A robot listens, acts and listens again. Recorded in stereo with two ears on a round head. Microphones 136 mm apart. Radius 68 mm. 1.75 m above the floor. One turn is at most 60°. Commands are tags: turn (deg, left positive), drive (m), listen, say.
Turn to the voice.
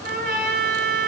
<listen/>
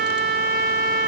<listen/>
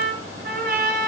<say>I can't make out anyone speaking, only a trumpet.</say>